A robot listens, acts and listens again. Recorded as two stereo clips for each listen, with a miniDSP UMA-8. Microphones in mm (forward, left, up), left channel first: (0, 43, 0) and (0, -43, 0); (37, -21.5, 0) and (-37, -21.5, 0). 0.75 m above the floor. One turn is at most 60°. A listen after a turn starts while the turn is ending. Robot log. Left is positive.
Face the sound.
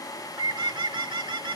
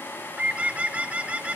note: The bird: 110° right.
cmd yaw -60
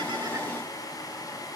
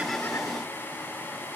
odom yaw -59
note: Nothing new. It was at 50° right.
cmd yaw -50
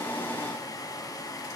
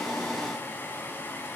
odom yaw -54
cmd idle
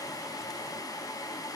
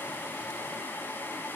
end: I heard a bird from this way, but can't make it out now.